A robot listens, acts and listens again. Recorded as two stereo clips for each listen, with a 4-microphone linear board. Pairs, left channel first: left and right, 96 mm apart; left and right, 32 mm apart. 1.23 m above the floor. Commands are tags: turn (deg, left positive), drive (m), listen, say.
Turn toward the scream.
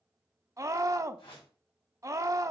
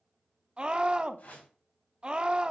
<turn deg="-30"/>
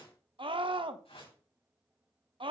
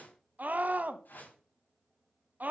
<turn deg="-120"/>
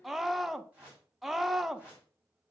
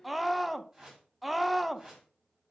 <say>Found it: a scream, straight ahead, 1 to 2 m away.</say>